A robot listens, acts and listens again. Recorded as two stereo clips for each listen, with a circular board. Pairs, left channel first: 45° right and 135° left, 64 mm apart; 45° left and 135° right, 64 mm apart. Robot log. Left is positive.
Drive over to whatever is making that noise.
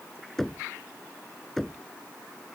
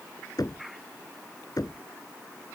note: The knocking: 40° left.
cmd yaw +40
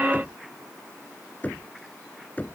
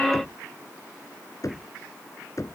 note: The knocking is now 20° left.
cmd yaw +20
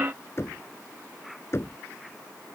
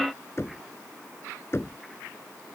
cmd fwd 1.0
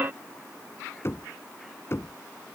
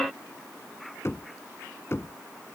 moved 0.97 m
cmd fwd 1.0
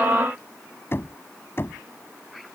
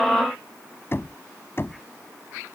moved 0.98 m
cmd fwd 1.0
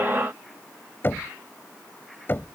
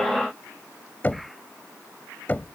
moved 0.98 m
cmd fwd 1.0
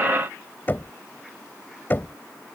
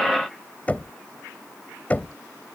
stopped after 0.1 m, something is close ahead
note: The knocking is now 10° right.
cmd yaw -10
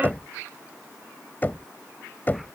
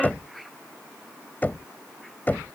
end: Arrived at the knocking, straight ahead.